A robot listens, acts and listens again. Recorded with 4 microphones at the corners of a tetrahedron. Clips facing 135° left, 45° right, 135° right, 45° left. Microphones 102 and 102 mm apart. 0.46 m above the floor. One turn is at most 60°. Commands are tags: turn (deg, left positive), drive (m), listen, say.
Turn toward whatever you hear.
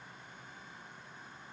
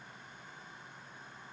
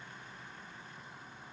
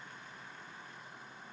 <listen/>
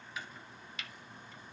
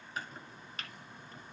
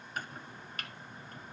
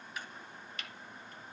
<turn deg="-60"/>
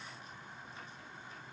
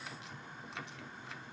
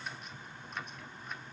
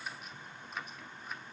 <turn deg="-45"/>
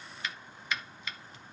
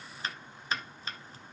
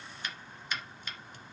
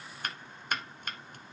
<turn deg="10"/>
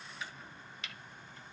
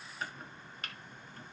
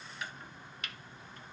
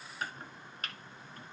<say>Found it: chopping, straight ahead.</say>